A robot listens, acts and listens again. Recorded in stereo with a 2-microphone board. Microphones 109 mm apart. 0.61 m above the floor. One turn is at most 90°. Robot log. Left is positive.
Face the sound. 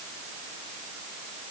cmd idle
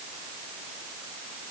cmd idle
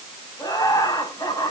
note: The laughter: about 30° left or 150° left.
cmd yaw +30
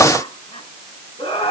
note: So it is at 115° left.
cmd yaw +90
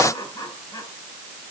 note: The laughter is now 30° left.
cmd yaw +30
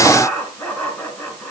note: The laughter is now 15° left.
cmd yaw +15
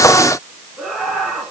end: Facing the laughter.